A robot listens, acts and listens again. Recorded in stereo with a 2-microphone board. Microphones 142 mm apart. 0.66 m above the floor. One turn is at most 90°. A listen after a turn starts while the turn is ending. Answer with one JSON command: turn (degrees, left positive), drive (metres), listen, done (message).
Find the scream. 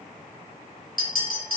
{"listen": true}
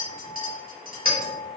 {"listen": true}
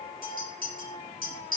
{"done": "I can't make out a scream, only a clink."}